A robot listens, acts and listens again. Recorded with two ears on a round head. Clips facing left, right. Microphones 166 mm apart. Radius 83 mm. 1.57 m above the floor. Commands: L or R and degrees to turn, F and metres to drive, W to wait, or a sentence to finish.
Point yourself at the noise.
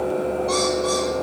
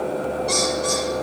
R30
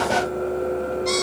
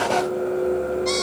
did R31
Found it: a bird, straight ahead, over 4 m away.